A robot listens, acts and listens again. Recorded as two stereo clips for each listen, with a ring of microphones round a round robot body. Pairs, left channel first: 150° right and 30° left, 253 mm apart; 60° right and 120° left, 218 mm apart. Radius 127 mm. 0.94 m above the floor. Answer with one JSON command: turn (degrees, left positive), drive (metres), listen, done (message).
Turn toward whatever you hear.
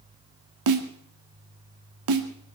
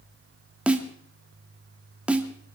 {"turn": 35}
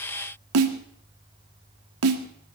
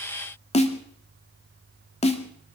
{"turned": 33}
{"done": "Found it: a snare drum, straight ahead, 2 to 4 m away."}